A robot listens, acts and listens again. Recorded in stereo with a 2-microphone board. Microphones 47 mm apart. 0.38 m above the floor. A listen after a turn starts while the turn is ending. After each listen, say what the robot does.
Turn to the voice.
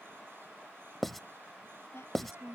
Turn 65° left.
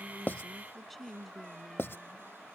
Facing the woman speaking.